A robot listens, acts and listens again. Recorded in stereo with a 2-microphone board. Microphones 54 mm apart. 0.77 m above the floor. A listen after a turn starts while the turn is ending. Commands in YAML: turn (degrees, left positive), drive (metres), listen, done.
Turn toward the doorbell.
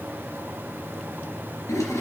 listen: true
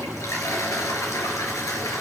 listen: true
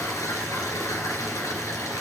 done: "I can't make out a doorbell, only a toilet flushing."